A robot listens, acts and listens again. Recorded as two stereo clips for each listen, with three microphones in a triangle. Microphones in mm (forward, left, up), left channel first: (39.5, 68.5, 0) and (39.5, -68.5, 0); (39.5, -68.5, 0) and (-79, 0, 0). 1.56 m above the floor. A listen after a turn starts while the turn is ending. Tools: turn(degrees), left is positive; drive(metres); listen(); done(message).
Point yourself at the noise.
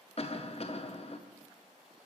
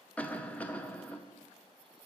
turn(degrees=50)
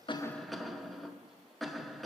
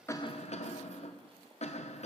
done("Facing the cough, under 1 m away.")